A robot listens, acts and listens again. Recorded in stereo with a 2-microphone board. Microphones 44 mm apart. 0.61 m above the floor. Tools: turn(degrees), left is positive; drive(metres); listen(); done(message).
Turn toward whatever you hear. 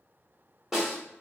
turn(degrees=-30)
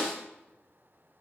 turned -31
turn(degrees=20)
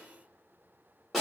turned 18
done("Found it: a snare drum, straight ahead.")